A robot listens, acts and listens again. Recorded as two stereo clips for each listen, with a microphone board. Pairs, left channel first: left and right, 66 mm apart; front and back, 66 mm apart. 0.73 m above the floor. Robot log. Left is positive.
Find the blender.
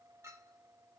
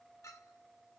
cmd idle
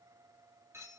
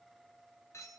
cmd idle
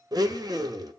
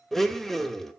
note: The blender: 85° right.
cmd yaw -85
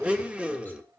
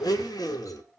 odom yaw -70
note: The blender is now 15° right.
cmd yaw -15
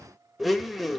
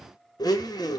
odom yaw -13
end: Found it: a blender, straight ahead, under 1 m away.